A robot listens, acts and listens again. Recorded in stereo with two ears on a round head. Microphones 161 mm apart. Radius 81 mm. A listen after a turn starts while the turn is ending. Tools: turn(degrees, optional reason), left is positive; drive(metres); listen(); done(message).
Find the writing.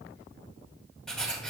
turn(degrees=30)
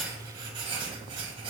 turn(degrees=-30, reason="So it is at 30° right.")
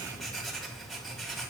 done("Found it: writing, straight ahead, 2 to 4 m away.")